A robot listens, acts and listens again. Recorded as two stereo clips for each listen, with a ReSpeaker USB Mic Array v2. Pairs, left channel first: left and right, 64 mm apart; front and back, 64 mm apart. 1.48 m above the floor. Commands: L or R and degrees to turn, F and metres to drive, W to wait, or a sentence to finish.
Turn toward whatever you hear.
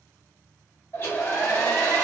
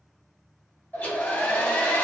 L55
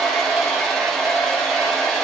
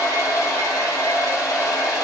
Facing the hair dryer, under 1 m away.